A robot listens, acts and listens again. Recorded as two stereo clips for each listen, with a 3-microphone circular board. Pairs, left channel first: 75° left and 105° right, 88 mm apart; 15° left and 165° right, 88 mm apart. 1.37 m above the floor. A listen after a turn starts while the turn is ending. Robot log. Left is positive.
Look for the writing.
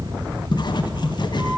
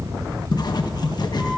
note: The writing: 50° left.
cmd yaw +50
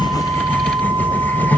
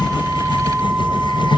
end: Facing the writing.